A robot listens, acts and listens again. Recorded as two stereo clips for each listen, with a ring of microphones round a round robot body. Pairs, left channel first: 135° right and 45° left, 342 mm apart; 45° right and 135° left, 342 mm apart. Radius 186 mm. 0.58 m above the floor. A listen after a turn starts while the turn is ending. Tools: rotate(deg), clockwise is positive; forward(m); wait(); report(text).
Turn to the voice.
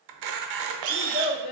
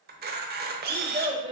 rotate(150)
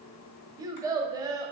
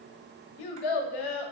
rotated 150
rotate(35)
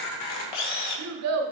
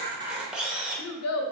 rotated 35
report("Facing the child speaking, under 1 m away.")